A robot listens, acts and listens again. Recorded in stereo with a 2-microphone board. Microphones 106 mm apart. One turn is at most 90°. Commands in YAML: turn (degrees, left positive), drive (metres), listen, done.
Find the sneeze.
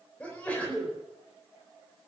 turn: 30
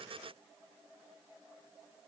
listen: true
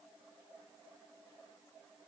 done: "I heard a sneeze, but can't make it out now. It was about 20° right or 140° left."